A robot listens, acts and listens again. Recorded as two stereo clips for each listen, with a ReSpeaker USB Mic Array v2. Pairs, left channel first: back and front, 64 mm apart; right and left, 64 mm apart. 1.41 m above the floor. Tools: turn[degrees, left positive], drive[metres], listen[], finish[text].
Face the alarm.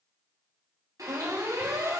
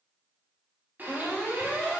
Thought: The alarm: 15° right.
Action: turn[-15]
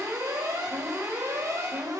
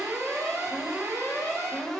Action: finish[Facing the alarm, over 4 m away.]